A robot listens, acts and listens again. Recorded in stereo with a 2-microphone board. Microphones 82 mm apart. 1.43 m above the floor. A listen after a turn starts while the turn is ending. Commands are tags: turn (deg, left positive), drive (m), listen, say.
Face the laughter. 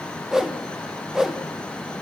<listen/>
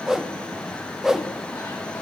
<listen/>
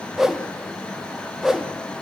<say>I can't make out laughter, only a whoosh.</say>